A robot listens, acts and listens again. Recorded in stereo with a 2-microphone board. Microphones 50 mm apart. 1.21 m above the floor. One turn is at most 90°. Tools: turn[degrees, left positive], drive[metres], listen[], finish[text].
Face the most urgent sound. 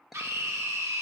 Action: turn[-90]
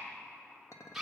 Action: finish[Found it: a scream, straight ahead.]